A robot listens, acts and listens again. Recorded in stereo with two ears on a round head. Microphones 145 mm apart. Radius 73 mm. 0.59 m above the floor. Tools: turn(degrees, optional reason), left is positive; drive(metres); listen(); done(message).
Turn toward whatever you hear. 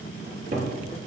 turn(degrees=-60, reason="The cupboard door: about 60° right or 120° right.")
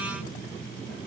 listen()
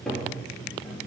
done("Facing the cupboard door.")